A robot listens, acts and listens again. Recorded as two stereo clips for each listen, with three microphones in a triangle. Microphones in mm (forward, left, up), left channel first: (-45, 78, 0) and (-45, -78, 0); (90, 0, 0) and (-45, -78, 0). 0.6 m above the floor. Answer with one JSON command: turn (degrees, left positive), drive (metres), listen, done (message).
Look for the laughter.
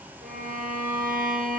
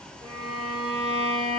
{"listen": true}
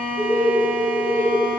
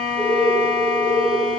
{"turn": 165}
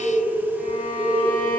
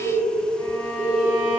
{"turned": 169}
{"done": "Facing the laughter, over 4 m away."}